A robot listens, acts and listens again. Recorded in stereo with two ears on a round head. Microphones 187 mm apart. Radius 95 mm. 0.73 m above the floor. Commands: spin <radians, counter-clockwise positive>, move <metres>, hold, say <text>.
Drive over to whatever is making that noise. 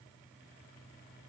hold
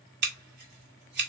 spin -0.87
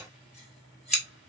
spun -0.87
move 1.0
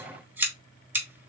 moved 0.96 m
spin -0.17
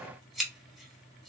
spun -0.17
move 1.0
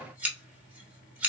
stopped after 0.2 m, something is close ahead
spin -0.17
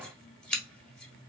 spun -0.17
say Arrived at the scissors, straight ahead.